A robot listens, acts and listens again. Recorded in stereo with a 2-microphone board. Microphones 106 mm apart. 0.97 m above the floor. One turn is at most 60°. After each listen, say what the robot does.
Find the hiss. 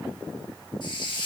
Turn 50° left.
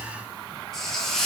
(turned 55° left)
Facing the hiss.